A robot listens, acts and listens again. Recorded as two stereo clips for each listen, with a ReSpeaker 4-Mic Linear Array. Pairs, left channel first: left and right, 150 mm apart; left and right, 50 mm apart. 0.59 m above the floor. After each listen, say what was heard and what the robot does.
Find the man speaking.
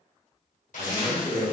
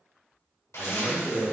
The man speaking: about 45° right or 135° right. Turn 45° right.
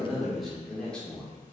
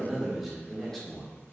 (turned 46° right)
So it is at 10° left. Turn 10° left.
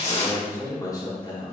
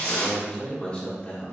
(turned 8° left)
The man speaking is now 30° left. Turn 30° left.
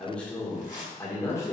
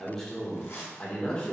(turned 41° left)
The man speaking is now 20° left. Turn 20° left.
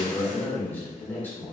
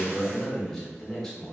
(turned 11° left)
The man speaking is now 10° left. Turn 10° left.
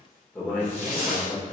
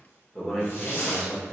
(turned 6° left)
Found it: a man speaking, straight ahead.